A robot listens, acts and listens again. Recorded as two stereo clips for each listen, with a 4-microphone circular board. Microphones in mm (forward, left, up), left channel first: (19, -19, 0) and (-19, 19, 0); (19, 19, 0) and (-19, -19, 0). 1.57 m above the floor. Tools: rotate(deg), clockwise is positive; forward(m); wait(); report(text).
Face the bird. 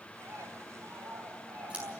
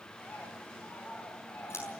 rotate(-110)
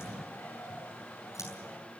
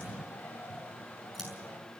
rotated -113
report("Facing the bird, over 4 m away.")